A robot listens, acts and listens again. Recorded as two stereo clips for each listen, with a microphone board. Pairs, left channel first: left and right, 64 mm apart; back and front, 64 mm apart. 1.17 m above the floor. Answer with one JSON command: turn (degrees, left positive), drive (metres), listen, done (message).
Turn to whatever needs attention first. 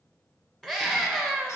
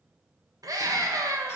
{"done": "Found it: a scream, straight ahead."}